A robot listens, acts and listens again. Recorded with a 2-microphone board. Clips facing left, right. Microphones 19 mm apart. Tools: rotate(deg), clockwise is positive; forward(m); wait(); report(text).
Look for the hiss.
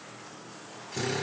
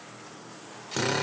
wait()
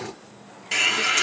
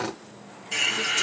rotate(-50)
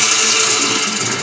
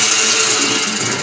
report("Facing the hiss, 1 to 2 m away.")